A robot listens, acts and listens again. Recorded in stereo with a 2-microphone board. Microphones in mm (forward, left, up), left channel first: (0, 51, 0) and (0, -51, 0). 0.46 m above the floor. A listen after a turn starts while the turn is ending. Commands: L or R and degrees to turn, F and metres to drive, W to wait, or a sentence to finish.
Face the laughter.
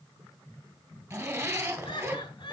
L50
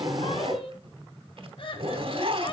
L60
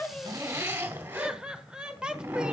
Found it: laughter, straight ahead, 1 to 2 m away.